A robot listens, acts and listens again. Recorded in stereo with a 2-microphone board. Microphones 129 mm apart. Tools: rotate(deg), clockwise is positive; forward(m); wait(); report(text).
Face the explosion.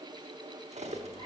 wait()
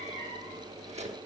wait()
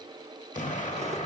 rotate(-90)
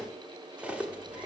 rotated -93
report("Facing where the explosion came from. I can't hear it now.")